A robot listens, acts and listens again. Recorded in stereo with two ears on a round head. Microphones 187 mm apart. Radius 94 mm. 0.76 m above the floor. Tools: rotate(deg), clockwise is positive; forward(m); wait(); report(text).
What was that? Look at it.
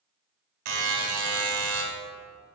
rotate(75)
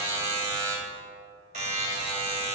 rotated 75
rotate(35)
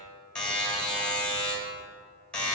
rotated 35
report("Found it: a buzzer, straight ahead, 1 to 2 m away.")